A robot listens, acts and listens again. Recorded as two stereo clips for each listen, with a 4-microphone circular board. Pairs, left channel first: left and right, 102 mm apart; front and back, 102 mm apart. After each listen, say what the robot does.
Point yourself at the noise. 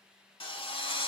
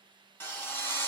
Turn 70° left.
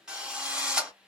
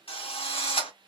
Turn 10° right.
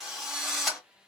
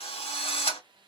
Found it: a drill, straight ahead, 1 to 2 m away.